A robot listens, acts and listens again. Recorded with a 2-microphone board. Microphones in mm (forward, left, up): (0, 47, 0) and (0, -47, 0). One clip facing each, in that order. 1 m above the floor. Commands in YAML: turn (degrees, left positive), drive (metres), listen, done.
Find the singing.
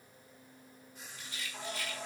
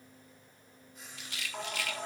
turn: -60
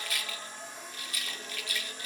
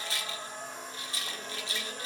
turn: -55
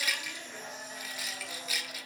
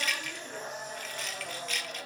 turn: -55
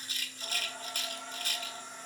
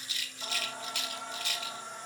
turn: -20
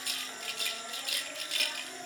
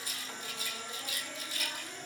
done: "Found it: singing, straight ahead, 2 to 4 m away."